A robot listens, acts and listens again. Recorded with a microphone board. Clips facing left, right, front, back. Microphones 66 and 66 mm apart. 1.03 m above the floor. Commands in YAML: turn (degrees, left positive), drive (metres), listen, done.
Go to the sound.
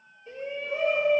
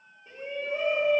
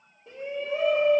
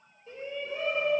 turn: -15
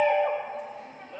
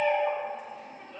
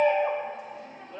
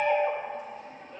drive: 1.0
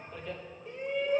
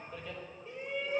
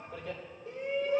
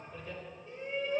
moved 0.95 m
drive: 1.0
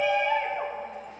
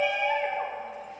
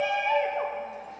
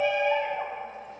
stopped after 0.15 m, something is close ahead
done: "Arrived at the shout, straight ahead."